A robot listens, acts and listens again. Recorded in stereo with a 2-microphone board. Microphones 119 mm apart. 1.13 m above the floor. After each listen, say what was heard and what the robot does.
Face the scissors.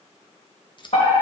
The scissors: about 40° left or 140° left. Turn 40° left.
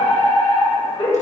Keep listening.
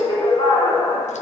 Keep listening.
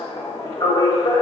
I heard scissors, but can't make it out now. It was about straight ahead or 100° left.